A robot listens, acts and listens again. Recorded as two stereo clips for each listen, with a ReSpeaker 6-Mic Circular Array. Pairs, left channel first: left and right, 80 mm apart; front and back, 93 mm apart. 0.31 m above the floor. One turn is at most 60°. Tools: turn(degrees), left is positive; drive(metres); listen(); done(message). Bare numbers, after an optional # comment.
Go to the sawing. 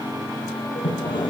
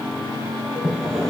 # The sawing: 90° left.
turn(60)
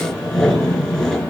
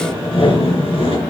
drive(1.0)
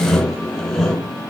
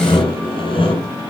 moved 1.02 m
drive(1.0)
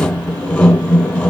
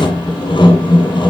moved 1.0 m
drive(1.0)
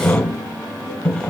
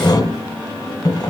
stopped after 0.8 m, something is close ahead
# The sawing is now 10° left.
turn(10)
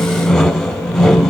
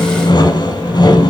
done("Arrived at the sawing, straight ahead.")